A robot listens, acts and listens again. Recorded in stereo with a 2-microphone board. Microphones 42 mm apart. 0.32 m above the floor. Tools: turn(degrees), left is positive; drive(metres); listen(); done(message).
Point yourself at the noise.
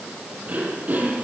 turn(degrees=-35)
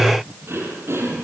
turn(degrees=-105)
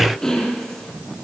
turn(degrees=10)
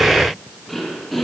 done("Facing the throat clearing, over 4 m away.")